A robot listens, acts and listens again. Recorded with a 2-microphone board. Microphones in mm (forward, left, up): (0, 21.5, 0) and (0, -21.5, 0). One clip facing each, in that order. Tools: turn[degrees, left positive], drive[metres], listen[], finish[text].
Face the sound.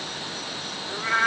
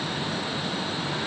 Thought: The cat meowing: about 55° left or 125° left.
Action: turn[55]
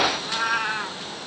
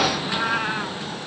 Action: finish[Facing the cat meowing.]